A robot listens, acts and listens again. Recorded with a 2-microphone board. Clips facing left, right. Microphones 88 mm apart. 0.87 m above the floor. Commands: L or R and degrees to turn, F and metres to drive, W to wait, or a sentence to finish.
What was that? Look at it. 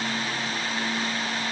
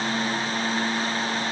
W
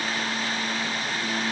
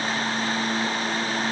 W
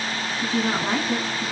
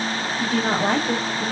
R55
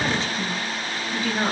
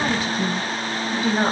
R15
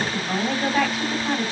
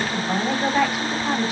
Facing the woman speaking, over 4 m away.